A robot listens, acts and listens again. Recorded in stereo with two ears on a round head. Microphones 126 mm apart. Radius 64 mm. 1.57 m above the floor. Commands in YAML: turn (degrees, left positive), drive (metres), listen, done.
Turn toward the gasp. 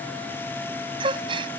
turn: -35
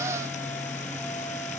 listen: true
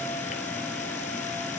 done: "I heard a gasp, but can't make it out now. It was about straight ahead or 110° right."